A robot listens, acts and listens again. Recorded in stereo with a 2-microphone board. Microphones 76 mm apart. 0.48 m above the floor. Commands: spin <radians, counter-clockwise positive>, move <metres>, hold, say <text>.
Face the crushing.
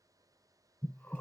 hold
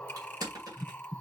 spin -1.05
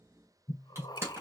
spin -0.70
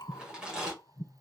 spin -0.17
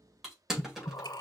say Found it: crushing, straight ahead.